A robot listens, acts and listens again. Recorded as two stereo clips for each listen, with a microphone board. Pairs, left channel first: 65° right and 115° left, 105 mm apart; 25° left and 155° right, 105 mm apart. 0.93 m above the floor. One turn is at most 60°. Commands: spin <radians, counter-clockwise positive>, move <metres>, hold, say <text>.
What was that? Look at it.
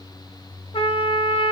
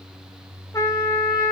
spin -0.70
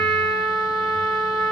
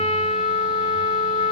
spin 0.26
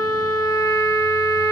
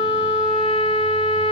say Found it: a trumpet, straight ahead, under 1 m away.